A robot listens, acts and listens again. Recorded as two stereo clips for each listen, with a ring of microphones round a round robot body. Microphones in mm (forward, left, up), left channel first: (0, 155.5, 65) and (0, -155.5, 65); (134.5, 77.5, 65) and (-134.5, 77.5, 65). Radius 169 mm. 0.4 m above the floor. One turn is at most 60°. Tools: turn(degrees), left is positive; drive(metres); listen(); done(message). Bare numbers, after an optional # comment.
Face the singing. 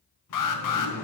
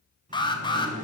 # The singing: 120° left.
turn(60)
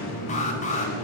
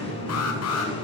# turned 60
# The singing is now 70° left.
turn(60)
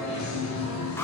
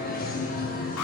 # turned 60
# The singing is now 60° left.
turn(60)
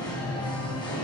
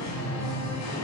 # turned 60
# The singing is now 15° left.
turn(15)
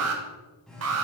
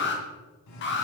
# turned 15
done("Found it: singing, straight ahead.")